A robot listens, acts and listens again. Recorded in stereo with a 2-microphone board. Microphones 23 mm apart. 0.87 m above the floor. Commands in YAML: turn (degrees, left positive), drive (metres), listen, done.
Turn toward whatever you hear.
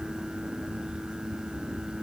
listen: true
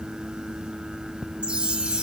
turn: -55
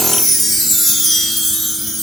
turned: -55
done: "Found it: a chime, straight ahead."